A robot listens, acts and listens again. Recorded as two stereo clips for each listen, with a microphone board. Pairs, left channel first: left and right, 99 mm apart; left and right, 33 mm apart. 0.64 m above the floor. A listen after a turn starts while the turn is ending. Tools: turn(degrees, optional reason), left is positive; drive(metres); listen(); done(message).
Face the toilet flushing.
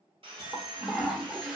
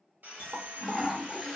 turn(degrees=-30)
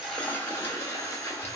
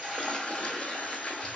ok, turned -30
turn(degrees=20, reason="So it is at 20° left.")
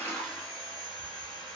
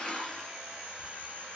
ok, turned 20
done("Facing the toilet flushing.")